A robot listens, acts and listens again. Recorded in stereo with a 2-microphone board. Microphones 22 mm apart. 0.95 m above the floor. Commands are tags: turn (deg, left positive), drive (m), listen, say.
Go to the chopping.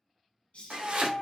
<turn deg="-70"/>
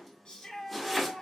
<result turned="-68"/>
<drive m="1.0"/>
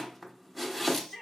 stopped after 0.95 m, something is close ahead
<say>I am next to the chopping.</say>